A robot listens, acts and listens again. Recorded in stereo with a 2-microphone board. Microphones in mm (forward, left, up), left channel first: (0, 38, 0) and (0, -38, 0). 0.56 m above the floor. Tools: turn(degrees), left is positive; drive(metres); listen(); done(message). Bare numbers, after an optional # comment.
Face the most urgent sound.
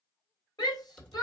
# The shout: about 65° left or 115° left.
turn(65)
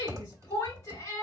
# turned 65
# So it is at 45° left.
turn(45)
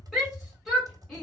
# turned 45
done("Facing the shout, 2 to 4 m away.")